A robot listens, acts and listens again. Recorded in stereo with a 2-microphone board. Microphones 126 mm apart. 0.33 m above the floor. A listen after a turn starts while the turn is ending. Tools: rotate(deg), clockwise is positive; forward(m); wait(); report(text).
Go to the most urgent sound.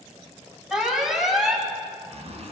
rotate(-30)
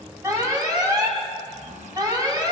rotate(35)
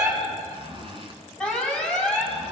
rotate(-10)
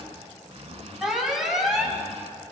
forward(1.0)
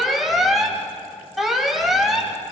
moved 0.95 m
forward(1.0)
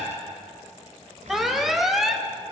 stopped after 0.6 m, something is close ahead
report("I am next to the alarm.")